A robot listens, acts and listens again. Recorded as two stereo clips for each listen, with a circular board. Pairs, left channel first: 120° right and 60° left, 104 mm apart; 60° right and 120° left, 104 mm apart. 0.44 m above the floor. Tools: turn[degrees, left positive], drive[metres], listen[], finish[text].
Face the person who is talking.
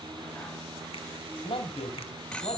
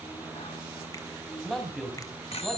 Thought: The man speaking: 150° right.
Action: turn[-150]
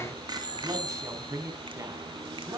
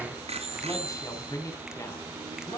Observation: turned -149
Action: finish[Facing the man speaking, over 4 m away.]